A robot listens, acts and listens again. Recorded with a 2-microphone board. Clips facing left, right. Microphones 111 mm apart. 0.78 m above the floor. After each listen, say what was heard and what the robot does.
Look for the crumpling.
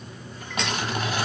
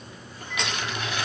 The crumpling: about 45° left or 135° left. Turn 45° left.
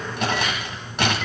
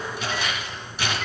So it is at 95° left. Turn 95° left.
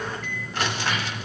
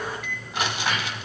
The crumpling is now 15° right. Turn 15° right.
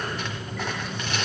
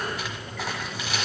Found it: crumpling, straight ahead, 1 to 2 m away.